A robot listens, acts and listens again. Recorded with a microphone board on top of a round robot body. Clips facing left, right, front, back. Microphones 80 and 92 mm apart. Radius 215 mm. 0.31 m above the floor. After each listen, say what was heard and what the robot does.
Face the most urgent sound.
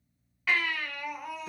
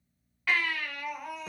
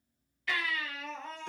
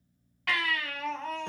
The baby crying: straight behind. Turn 180° left.
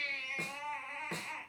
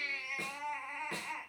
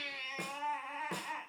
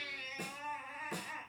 The baby crying is now 15° right. Turn 15° right.
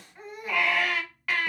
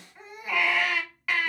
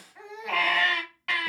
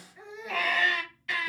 Facing the baby crying.